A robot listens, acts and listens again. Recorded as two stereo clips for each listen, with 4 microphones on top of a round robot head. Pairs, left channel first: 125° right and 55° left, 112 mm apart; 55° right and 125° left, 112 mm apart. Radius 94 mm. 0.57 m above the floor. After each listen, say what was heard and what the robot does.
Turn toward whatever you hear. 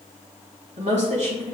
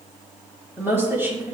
The woman speaking: 55° left. Turn 55° left.
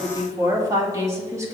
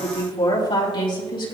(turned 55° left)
The woman speaking is now 10° right. Turn 10° right.
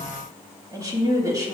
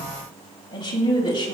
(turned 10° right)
Facing the woman speaking.